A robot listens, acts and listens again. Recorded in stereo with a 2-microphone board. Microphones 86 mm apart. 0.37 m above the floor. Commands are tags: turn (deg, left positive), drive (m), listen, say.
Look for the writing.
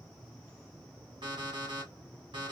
<listen/>
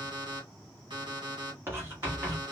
<turn deg="-30"/>
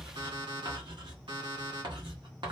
<turn deg="-120"/>
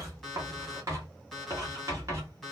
<turn deg="-40"/>
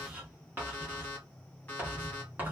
<turn deg="-20"/>
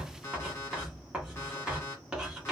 <turn deg="-10"/>
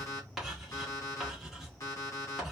<say>Found it: writing, straight ahead.</say>